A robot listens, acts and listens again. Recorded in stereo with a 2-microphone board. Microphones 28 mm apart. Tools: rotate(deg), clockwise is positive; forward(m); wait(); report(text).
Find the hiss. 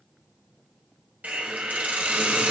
rotate(70)
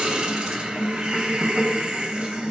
rotate(35)
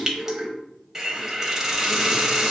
rotate(20)
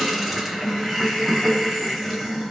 report("Facing the hiss, under 1 m away.")